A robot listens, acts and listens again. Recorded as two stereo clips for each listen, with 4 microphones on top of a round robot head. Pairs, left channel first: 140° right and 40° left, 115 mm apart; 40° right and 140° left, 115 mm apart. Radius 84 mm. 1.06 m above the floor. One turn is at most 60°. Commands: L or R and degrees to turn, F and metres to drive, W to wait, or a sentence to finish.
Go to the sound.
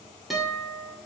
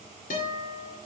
R50
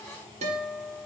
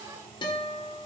L10
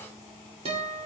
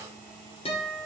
F1.0
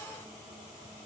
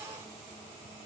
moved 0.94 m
W
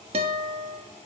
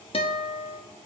F1.0
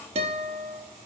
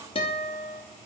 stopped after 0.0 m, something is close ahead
I am next to the guitar.